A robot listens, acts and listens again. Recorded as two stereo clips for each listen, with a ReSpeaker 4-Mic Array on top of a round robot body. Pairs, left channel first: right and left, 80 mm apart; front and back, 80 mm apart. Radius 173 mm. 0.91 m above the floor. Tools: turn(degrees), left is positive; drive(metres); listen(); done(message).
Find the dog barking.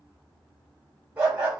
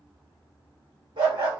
turn(degrees=165)
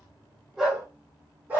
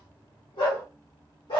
turn(degrees=20)
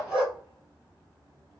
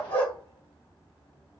turn(degrees=10)
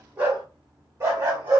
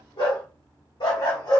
turn(degrees=35)
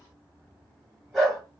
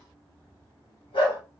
done("Facing the dog barking, 1 to 2 m away.")